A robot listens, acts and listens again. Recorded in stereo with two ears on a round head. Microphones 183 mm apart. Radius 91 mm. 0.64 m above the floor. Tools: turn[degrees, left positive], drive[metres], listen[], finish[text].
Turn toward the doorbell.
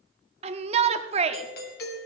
Thought: The doorbell: about 55° left or 125° left.
Action: turn[55]
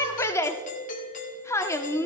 Thought: So it is at 50° left.
Action: turn[50]
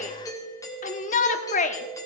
Thought: The doorbell is now 20° left.
Action: turn[20]
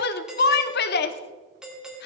Action: finish[Found it: a doorbell, straight ahead.]